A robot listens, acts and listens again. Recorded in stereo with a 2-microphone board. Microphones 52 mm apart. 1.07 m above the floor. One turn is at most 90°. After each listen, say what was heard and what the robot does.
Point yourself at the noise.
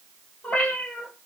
The cat meowing: about 30° left or 150° left. Turn 30° left.
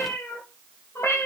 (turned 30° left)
So it is at 120° left. Turn 90° left.
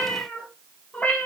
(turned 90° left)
The cat meowing is now 30° left. Turn 30° left.
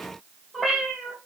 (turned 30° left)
Found it: a cat meowing, straight ahead.